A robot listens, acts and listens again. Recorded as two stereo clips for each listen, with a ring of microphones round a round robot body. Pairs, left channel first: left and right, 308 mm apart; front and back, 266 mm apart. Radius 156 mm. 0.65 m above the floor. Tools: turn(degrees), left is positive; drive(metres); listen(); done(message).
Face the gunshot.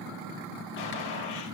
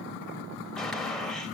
turn(degrees=90)
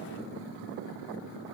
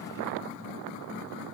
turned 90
done("Facing where the gunshot came from. I can't hear it now.")